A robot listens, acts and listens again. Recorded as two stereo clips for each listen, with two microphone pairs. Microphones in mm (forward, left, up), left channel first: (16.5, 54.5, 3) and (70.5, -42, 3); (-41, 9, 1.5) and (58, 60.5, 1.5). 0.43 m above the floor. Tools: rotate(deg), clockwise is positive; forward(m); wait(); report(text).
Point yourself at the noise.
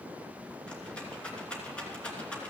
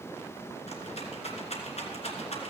rotate(160)
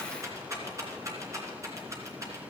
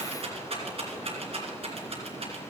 report("Found it: a rattle, straight ahead.")